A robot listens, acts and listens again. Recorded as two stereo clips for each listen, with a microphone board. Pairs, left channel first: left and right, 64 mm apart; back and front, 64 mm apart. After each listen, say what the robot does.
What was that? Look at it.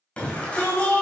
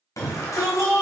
Turn 160° left.
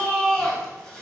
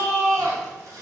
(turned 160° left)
Turn 10° left.
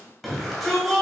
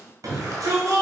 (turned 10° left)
Facing the shout, 2 to 4 m away.